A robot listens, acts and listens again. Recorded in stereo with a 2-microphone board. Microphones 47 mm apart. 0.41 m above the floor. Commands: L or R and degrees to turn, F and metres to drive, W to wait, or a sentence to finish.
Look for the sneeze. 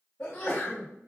L45
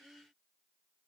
W
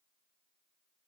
I heard a sneeze, but can't make it out now. It was about straight ahead or 90° left.